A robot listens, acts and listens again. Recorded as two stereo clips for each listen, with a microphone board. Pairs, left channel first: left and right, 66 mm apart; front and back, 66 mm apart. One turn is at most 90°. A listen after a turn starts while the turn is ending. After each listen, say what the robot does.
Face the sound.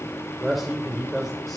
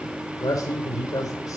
Found it: a man speaking, straight ahead.